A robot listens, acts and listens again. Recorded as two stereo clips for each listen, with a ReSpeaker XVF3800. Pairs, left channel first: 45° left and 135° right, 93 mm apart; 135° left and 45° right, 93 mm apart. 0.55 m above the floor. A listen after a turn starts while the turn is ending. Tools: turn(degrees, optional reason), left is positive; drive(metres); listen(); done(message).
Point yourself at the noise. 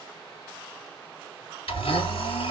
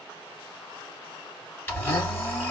turn(degrees=65, reason="The blender: 65° left.")
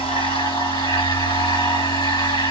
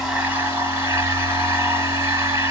turn(degrees=15, reason="The blender is now 15° left.")
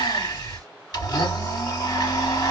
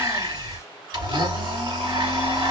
done("Found it: a blender, straight ahead.")